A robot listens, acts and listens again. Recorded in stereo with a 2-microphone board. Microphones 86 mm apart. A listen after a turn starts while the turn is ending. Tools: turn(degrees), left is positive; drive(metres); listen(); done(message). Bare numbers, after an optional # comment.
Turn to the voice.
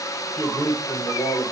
# The man speaking: about 35° left or 145° left.
turn(35)
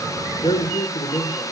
# So it is at 125° left.
turn(125)
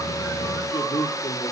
# The man speaking is now 60° left.
turn(60)
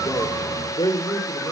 # The man speaking is now 60° left.
turn(60)
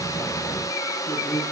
# The man speaking is now 25° left.
turn(25)
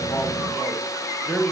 done("Facing the man speaking.")